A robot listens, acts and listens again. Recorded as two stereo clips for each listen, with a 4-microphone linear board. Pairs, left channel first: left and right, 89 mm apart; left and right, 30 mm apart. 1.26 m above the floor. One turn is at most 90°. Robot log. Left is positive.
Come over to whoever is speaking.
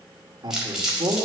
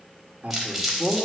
note: The man speaking: about 50° right or 130° right.
cmd yaw -50
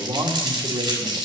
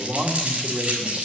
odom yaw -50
note: So it is at 80° right.
cmd yaw -80
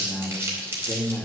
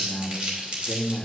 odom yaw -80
note: The man speaking is now 15° left.
cmd yaw +15
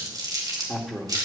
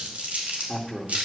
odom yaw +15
cmd fwd 1.0
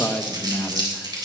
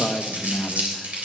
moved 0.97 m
note: The man speaking is now 10° left.
cmd yaw +10
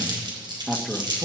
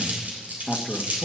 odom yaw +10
cmd fwd 1.0
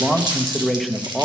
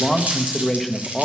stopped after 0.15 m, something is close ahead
end: Arrived at the man speaking, straight ahead.